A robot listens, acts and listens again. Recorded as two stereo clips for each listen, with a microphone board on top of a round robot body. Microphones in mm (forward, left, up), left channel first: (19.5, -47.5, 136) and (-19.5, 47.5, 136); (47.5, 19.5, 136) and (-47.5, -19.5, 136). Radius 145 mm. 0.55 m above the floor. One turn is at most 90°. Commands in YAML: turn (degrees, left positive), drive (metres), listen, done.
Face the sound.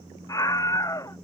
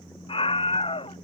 turn: -10
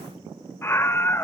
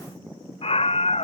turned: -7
done: "Facing the scream."